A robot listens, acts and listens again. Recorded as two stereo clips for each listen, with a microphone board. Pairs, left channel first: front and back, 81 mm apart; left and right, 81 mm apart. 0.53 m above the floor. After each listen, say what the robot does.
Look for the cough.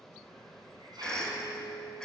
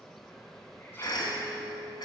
Turn 80° left.
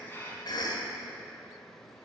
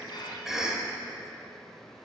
Turn 10° right.
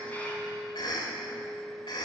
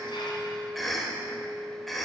Found it: a cough, straight ahead, 2 to 4 m away.